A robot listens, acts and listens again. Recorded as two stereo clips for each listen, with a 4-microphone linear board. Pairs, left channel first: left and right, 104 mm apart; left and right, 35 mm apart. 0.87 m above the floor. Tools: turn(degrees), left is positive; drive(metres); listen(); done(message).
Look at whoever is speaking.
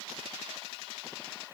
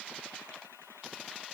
listen()
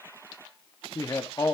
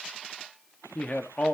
turn(degrees=35)
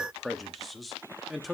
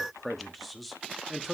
done("Found it: a man speaking, straight ahead.")